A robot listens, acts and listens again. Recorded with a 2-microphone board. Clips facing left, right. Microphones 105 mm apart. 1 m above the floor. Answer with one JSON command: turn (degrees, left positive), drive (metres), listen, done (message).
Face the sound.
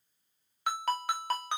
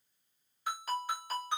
{"turn": 70}
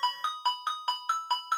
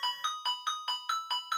{"turn": 35}
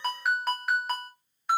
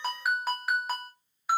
{"done": "Found it: a ringtone, straight ahead, under 1 m away."}